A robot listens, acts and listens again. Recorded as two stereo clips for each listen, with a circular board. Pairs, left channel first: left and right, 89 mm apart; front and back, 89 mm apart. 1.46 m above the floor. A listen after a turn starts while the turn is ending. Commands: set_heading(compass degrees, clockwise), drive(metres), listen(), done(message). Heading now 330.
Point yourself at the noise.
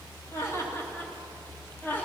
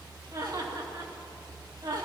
set_heading(175)
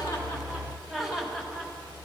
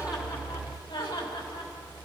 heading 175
done("Facing the laughter.")